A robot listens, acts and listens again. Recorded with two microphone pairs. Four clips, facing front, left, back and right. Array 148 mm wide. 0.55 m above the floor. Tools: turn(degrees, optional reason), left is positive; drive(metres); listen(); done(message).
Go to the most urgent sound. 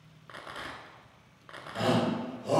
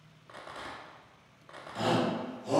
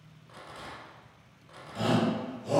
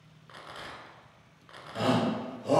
turn(degrees=-55, reason="The shout: 55° right.")
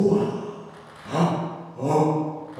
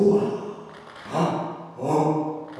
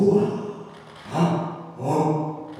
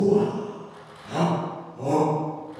turn(degrees=20, reason="The shout is now 20° left.")
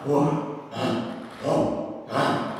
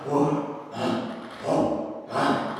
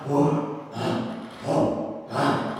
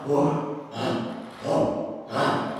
drive(metres=1.0)
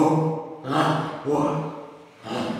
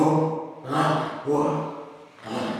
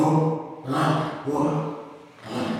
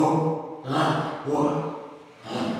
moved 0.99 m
drive(metres=1.0)
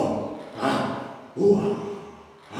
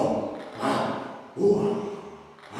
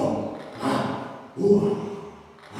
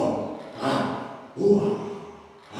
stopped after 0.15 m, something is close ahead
done("Arrived at the shout, straight ahead.")